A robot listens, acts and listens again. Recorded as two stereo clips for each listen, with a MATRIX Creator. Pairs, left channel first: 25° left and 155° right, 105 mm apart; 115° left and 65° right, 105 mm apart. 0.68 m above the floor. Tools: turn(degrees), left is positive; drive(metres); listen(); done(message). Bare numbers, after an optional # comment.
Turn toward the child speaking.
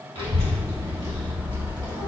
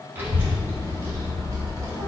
# The child speaking: 115° right.
turn(-115)
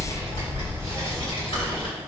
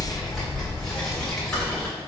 # The child speaking is now 30° left.
turn(30)
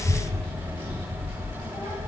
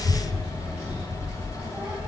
done("Facing the child speaking, 2 to 4 m away.")